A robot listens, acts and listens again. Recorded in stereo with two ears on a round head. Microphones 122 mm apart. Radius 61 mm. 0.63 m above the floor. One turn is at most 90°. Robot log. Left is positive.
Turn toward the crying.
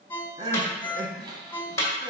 note: The crying: about 35° right or 145° right.
cmd yaw -35
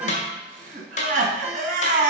note: So it is at 110° right.
cmd yaw -90
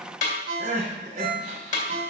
note: The crying is now 50° right.
cmd yaw -50
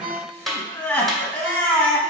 note: The crying is now 15° left.
cmd yaw +15
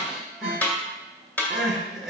end: Found it: crying, straight ahead, 2 to 4 m away.